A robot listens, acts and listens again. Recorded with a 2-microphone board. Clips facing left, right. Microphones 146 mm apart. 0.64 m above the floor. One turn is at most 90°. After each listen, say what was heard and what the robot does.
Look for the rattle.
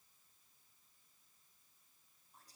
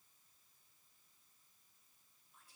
Keep listening.
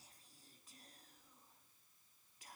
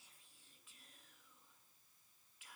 Keep listening.
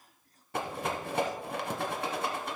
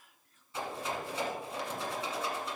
The rattle: about 70° left or 110° left. Turn 70° left.
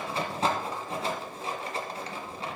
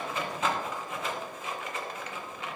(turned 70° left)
So it is at 35° left. Turn 35° left.
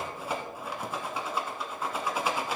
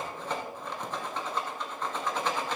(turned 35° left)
The rattle is now 10° left. Turn 10° left.
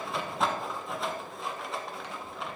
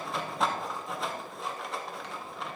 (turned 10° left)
Facing the rattle.